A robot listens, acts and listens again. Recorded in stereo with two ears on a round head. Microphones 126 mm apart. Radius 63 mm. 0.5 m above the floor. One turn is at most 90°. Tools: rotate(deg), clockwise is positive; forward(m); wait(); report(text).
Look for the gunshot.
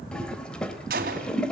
rotate(70)
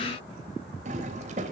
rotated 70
wait()
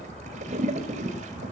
report("I heard a gunshot, but can't make it out now. It was about straight ahead or 40° right.")